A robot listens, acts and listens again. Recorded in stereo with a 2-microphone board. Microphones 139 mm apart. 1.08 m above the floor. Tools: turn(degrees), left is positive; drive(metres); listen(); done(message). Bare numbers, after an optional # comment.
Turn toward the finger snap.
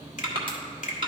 # The finger snap: about 65° left or 115° left.
turn(65)
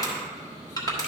listen()
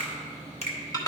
# So it is at 50° left.
turn(50)
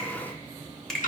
done("Facing the finger snap.")